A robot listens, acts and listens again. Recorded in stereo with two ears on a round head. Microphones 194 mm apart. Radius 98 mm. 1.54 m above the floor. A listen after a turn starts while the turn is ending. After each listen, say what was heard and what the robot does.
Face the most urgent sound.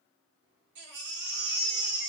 The baby crying: about 55° right or 125° right. Turn 55° right.
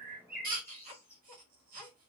So it is at 50° right. Turn 50° right.
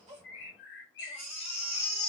Found it: a baby crying, straight ahead.